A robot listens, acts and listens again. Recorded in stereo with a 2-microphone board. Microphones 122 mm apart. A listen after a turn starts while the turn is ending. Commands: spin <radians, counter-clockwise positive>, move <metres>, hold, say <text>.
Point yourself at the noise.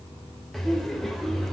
spin 0.52
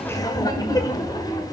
spin 2.53
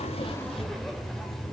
say Facing the laughter.